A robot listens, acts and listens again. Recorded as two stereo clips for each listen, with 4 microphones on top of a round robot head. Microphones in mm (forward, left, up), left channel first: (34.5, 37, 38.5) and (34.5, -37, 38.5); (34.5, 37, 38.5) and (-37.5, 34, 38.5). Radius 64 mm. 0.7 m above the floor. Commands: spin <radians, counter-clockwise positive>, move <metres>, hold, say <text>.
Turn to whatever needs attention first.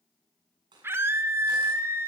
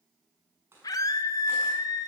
spin -0.61
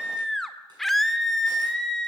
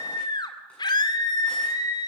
say Facing the scream, 2 to 4 m away.